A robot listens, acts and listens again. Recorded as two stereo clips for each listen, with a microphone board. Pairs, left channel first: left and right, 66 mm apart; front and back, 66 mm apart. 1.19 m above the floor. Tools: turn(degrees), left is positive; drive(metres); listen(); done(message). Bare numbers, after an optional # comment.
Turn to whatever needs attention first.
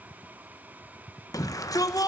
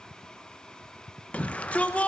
# The shout: 65° left.
turn(65)
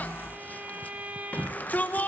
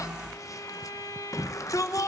# The shout is now 25° left.
turn(25)
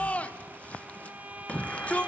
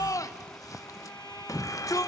# The shout is now 20° left.
turn(20)
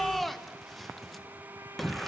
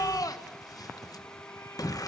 done("Facing the shout, 1 to 2 m away.")